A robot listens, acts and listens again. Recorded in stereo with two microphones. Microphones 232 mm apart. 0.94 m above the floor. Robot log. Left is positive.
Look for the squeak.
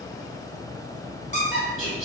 note: The squeak: about 30° left or 150° left.
cmd yaw +30
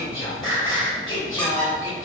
cmd idle
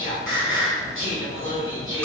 cmd idle
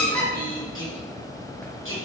end: Found it: a squeak, straight ahead.